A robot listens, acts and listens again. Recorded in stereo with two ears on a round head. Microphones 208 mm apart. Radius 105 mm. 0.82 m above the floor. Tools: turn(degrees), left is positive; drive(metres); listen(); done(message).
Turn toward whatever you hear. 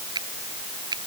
turn(degrees=-20)
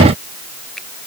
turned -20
listen()
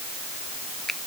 done("Facing the finger snap.")